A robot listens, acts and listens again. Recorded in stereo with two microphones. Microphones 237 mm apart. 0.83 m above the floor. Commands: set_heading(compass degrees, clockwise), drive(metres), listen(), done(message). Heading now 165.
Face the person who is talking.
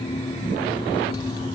listen()
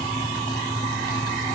listen()
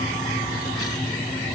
done("I can't make out anyone speaking to turn to.")